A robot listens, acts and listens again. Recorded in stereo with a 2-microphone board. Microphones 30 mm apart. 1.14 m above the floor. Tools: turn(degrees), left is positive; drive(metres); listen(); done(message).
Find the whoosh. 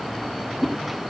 turn(degrees=-30)
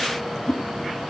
turn(degrees=20)
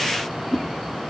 done("Found it: a whoosh, straight ahead, 2 to 4 m away.")